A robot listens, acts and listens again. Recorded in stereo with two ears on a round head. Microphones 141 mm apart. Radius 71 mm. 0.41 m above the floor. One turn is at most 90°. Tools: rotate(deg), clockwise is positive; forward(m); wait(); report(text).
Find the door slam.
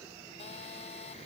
wait()
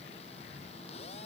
wait()
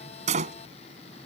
rotate(45)
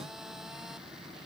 wait()
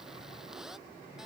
report("I heard a door slam, but can't make it out now. It was about straight ahead or 90° right.")